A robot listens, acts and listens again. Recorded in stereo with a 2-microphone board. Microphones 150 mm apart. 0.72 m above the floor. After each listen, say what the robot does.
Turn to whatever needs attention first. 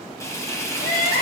Turn 70° left.
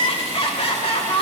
Turn 40° left.
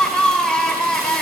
Facing the crying.